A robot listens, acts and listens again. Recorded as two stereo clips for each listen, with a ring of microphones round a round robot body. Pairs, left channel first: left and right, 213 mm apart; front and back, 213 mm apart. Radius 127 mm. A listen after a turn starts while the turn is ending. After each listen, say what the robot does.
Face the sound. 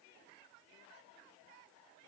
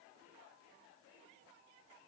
Keep listening.
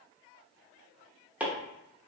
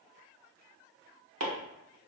Turn 175° right.
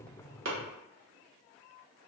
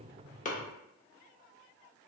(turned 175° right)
Keep listening.
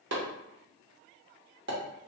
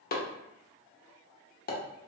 Turn 45° right.
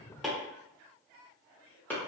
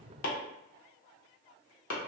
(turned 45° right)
Turn 10° left.
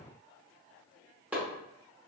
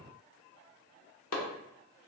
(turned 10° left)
Facing the chopping, under 1 m away.